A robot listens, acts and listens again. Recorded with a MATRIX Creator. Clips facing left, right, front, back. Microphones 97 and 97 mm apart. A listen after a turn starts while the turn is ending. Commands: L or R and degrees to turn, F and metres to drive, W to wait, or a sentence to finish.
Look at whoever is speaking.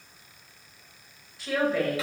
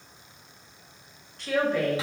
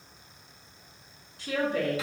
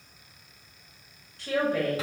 L180
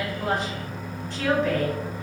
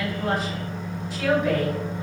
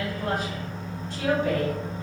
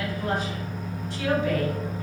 Found it: a woman speaking, straight ahead.